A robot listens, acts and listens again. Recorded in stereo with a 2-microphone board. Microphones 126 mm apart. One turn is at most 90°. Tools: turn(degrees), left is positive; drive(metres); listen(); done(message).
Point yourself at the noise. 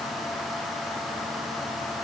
listen()
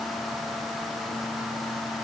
listen()
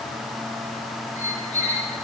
turn(degrees=75)
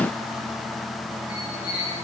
turn(degrees=35)
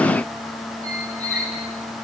turn(degrees=15)
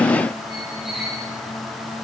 done("Found it: a squeak, straight ahead.")